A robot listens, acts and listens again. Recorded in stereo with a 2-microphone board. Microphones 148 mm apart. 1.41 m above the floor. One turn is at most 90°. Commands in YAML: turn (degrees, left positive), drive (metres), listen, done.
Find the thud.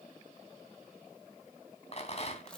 listen: true
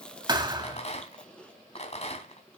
turn: -30
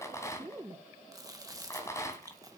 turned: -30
listen: true
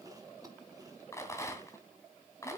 done: "I heard a thud, but can't make it out now. It was about straight ahead or 120° right."